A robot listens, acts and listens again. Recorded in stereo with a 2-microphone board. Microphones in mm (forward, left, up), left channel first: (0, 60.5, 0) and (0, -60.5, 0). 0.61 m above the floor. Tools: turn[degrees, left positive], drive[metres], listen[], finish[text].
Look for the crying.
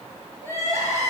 Thought: The crying: about 25° right or 155° right.
Action: turn[-25]
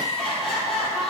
Action: finish[Found it: crying, straight ahead, 2 to 4 m away.]